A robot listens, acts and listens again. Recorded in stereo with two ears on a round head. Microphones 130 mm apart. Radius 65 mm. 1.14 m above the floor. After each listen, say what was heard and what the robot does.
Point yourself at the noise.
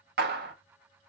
The clap: about 70° right or 110° right. Turn 70° right.
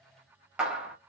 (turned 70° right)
Facing the clap.